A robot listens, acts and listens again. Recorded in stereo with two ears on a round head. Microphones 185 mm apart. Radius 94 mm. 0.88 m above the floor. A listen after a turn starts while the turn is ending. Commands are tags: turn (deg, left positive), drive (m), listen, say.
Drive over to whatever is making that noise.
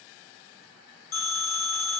<turn deg="75"/>
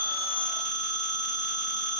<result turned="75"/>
<drive m="1.0"/>
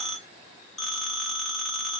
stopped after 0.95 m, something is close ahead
<say>I am next to the phone ringing.</say>